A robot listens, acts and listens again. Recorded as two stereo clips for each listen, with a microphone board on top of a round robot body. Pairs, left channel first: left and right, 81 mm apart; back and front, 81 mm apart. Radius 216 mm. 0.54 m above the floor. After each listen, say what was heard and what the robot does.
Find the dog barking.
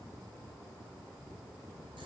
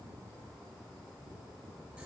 Keep listening.
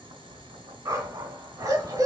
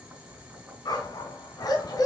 The dog barking: 135° right. Turn 135° right.
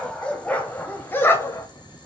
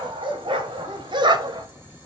The dog barking is now 30° left. Turn 30° left.
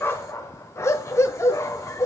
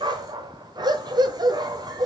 The dog barking is now 35° left. Turn 35° left.
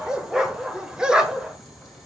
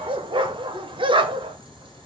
Found it: a dog barking, straight ahead, 1 to 2 m away.